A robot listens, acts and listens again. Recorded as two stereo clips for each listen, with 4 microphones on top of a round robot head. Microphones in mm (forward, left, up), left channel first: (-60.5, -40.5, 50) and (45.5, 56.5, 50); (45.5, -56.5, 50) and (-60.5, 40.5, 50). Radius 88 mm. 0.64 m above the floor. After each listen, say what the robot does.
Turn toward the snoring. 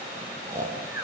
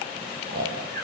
Turn 115° left.
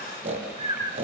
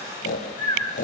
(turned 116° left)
Facing the snoring, over 4 m away.